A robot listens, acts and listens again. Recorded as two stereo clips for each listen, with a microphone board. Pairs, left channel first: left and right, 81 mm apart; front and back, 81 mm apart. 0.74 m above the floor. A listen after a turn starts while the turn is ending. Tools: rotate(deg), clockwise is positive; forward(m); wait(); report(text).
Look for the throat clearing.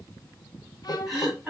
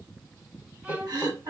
rotate(170)
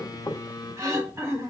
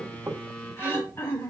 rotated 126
rotate(45)
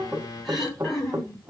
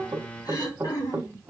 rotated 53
rotate(-10)
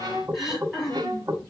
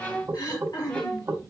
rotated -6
report("Facing the throat clearing.")